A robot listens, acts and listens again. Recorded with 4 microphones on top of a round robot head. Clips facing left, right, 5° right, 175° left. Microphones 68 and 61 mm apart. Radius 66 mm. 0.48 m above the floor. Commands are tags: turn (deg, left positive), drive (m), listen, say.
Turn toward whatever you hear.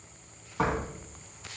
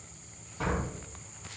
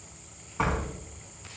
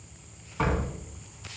<turn deg="75"/>
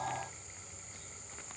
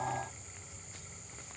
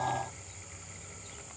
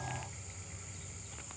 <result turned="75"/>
<say>I heard a door slam from this way, but can't make it out now.</say>